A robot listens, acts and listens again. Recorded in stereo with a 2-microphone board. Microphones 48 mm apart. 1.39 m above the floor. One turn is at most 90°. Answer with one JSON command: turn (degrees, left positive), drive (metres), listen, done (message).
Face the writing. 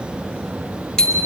{"listen": true}
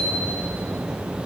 {"listen": true}
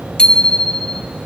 {"done": "I can't make out writing, only a bicycle bell."}